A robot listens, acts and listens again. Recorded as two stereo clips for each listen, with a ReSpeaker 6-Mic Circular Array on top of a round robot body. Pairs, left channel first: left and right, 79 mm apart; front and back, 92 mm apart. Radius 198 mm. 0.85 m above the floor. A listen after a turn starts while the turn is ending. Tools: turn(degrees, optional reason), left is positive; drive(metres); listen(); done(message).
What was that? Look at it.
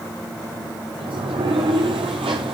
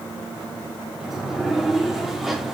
turn(degrees=-90, reason="The sliding door: 90° right.")
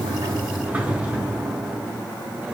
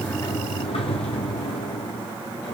turn(degrees=-20, reason="The sliding door is now 20° right.")
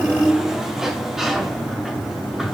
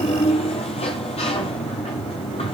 done("Found it: a sliding door, straight ahead, under 1 m away.")